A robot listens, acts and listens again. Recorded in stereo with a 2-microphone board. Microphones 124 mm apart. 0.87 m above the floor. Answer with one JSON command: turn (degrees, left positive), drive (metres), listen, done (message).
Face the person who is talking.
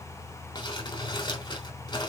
{"listen": true}
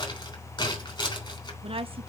{"turn": -50}
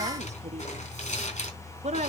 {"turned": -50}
{"turn": -75}
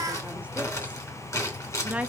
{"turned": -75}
{"turn": -10}
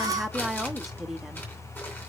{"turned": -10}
{"done": "Found it: a woman speaking, straight ahead, 1 to 2 m away."}